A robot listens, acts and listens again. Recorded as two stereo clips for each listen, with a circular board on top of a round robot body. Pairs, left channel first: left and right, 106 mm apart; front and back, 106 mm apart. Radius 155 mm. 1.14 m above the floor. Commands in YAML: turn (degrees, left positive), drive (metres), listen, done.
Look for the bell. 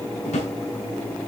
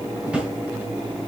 listen: true
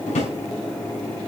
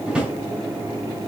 listen: true
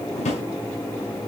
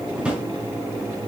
done: "I can't make out a bell, only a drawer."